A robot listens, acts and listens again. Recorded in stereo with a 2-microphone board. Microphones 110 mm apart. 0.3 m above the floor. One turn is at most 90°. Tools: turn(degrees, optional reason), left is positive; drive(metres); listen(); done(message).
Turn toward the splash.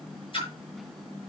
turn(degrees=50, reason="The splash: about 50° left or 130° left.")
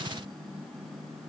listen()
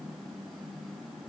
done("I heard a splash, but can't make it out now. It was about straight ahead or 80° left.")